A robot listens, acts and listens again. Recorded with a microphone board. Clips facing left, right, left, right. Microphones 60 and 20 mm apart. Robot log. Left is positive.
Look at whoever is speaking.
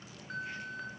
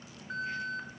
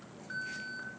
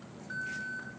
cmd idle
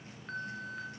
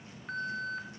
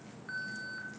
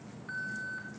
cmd idle
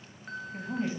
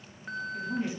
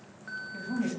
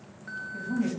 note: The woman speaking: about 35° left or 145° left.
cmd yaw +35
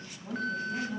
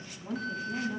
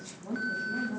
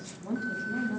note: So it is at 10° right.
cmd yaw -10
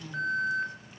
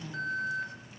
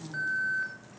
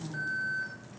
end: Facing the woman speaking.